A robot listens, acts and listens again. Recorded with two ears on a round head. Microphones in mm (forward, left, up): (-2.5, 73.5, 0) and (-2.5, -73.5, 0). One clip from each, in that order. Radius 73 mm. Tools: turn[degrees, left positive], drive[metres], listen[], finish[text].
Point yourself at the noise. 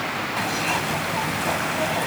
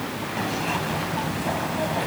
Thought: The zipper: about 40° left or 140° left.
Action: turn[40]
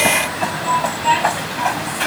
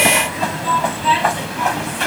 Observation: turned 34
Action: finish[Facing the zipper.]